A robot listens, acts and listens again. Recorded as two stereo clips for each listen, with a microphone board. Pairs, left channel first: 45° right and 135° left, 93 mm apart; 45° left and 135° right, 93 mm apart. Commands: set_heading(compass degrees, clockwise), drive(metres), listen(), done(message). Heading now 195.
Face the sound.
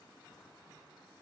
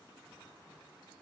listen()
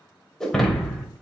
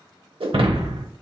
set_heading(325)
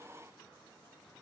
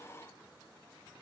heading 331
done("I heard breaking glass from this way, but can't make it out now.")